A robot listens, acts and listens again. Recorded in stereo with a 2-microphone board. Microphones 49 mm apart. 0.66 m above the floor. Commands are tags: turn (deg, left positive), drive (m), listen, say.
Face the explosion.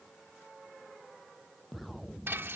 <turn deg="30"/>
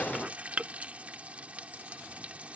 <listen/>
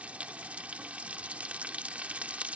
<say>I heard an explosion, but can't make it out now. It was about 30° right or 150° left.</say>